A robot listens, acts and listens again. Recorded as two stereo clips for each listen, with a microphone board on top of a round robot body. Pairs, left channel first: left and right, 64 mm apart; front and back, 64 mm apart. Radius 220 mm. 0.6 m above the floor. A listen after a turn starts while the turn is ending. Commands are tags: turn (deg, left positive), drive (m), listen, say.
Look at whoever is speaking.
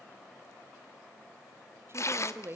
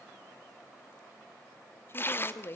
<turn deg="-45"/>
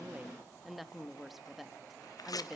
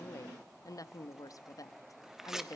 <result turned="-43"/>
<say>Facing the woman speaking.</say>